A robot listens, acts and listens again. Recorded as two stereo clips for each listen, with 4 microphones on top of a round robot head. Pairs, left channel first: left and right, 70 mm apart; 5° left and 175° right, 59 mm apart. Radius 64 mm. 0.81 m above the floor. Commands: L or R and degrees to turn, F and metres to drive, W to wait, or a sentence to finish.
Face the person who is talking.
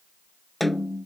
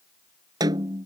W
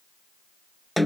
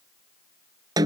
W
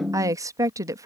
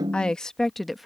R85
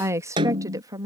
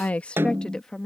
R80
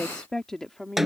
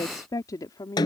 Found it: a woman speaking, straight ahead.